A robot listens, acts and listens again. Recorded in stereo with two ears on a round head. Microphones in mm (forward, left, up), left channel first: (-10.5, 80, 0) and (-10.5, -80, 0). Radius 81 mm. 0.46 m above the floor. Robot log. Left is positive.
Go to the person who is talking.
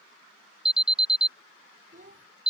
note: The child speaking: about 40° right or 140° right.
cmd yaw -40
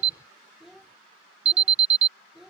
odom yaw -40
cmd fwd 1.0
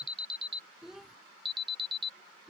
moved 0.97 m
cmd fwd 1.0
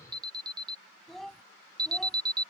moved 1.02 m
cmd fwd 1.0
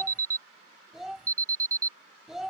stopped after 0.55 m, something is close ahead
end: Arrived at the child speaking, straight ahead.